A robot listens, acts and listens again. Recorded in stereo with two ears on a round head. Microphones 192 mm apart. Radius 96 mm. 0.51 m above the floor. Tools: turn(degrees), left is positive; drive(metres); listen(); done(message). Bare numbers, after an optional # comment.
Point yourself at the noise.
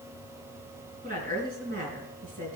# The woman speaking: about 40° right or 140° right.
turn(-40)
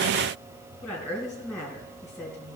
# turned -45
done("Facing the woman speaking.")